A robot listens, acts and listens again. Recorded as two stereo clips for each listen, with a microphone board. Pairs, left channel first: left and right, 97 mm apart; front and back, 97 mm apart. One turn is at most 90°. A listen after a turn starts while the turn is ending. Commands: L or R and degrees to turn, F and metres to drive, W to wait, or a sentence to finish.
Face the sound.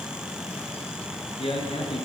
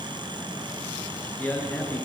L75
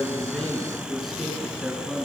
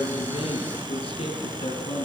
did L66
Facing the man speaking.